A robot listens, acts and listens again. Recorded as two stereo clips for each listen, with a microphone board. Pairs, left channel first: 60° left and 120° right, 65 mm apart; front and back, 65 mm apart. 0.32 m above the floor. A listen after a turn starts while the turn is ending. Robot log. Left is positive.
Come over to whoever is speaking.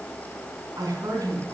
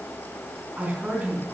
note: The woman speaking: 120° right.
cmd yaw -120
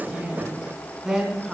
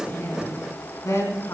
note: The woman speaking is now 35° right.
cmd yaw -35
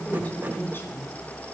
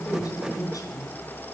note: The woman speaking is now 10° left.
cmd yaw +10
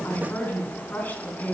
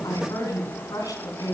cmd fwd 1.0
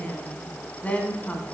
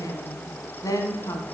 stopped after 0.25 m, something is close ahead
end: Something is in my way. I am facing the woman speaking but have not reached it.